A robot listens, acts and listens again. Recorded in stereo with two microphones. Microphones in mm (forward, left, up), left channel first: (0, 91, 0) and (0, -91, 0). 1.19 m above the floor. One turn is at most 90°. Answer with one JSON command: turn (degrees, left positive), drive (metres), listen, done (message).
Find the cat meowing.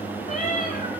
{"turn": 45}
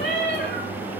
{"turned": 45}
{"turn": 75}
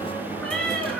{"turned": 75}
{"done": "Found it: a cat meowing, straight ahead, 2 to 4 m away."}